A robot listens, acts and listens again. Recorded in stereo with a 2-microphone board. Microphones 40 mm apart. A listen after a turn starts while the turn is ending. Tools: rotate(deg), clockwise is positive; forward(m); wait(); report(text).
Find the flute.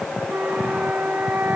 rotate(55)
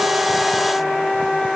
report("Found it: a flute, straight ahead.")